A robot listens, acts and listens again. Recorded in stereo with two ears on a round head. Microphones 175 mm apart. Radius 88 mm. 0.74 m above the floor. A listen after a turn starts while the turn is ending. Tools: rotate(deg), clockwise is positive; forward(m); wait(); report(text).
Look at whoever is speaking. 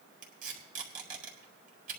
wait()
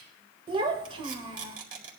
rotate(30)
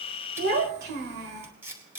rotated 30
rotate(120)
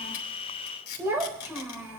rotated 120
rotate(10)
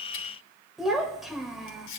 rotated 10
report("Facing the child speaking, 1 to 2 m away.")